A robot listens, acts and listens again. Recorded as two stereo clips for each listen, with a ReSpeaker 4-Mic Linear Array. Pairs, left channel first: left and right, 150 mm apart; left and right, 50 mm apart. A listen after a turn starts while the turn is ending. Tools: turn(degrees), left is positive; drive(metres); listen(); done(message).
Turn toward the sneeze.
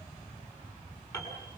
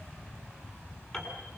listen()
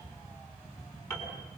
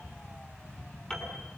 listen()
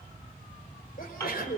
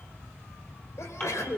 turn(degrees=90)
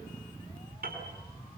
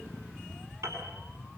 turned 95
done("Facing where the sneeze came from. I can't hear it now.")